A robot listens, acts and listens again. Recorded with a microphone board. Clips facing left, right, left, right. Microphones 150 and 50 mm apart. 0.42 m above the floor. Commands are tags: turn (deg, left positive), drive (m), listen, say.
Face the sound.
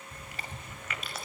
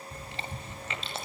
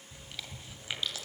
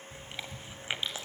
<turn deg="-25"/>
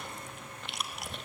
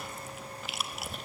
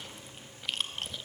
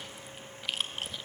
<say>Facing the chewing.</say>